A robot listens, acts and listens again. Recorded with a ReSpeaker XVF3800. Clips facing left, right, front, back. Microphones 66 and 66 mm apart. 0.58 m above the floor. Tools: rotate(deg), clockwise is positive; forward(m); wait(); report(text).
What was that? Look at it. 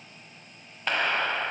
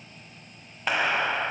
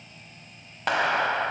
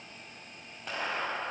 rotate(10)
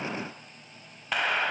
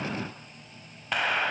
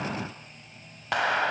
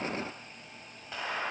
report("Found it: a clap, straight ahead.")